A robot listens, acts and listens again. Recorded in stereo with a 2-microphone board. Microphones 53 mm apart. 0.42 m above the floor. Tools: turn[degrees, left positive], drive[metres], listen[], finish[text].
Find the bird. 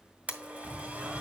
Thought: The bird: about 40° right or 140° right.
Action: turn[-40]
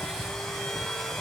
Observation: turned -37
Thought: So it is at 100° right.
Action: turn[-100]
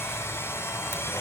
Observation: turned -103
Action: listen[]
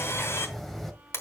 Action: finish[Found it: a bird, straight ahead.]